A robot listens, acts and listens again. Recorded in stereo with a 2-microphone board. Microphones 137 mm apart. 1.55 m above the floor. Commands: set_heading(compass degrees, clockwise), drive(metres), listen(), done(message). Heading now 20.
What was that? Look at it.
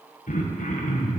set_heading(310)
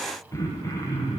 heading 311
set_heading(286)
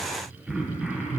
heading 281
done("Found it: throat clearing, straight ahead, under 1 m away.")